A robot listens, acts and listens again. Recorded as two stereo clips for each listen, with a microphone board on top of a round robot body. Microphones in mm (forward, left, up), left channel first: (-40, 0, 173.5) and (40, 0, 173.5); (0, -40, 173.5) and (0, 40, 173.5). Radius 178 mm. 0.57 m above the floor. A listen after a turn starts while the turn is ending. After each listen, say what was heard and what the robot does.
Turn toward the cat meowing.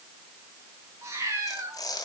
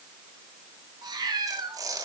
The cat meowing: 55° left. Turn 55° left.
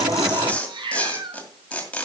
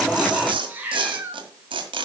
The cat meowing is now 20° left. Turn 20° left.
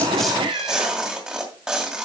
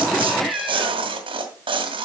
Found it: a cat meowing, straight ahead, 2 to 4 m away.